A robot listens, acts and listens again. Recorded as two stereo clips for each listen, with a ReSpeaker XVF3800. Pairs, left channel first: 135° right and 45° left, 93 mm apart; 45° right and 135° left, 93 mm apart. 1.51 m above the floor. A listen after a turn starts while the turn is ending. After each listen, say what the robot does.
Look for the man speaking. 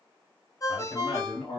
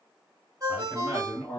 Turn 145° right.
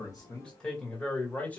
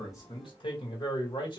Turn 65° right.
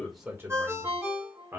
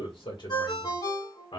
Turn 20° right.
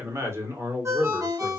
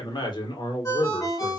Turn 25° right.
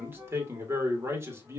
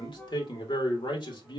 Turn 15° right.
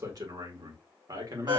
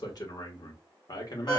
Found it: a man speaking, straight ahead, 1 to 2 m away.